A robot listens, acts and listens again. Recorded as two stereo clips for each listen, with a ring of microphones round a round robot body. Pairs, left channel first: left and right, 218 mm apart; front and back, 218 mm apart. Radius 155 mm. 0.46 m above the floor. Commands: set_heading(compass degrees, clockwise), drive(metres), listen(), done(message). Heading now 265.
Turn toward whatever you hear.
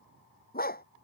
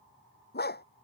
set_heading(220)
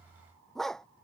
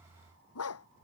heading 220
done("Facing the dog barking.")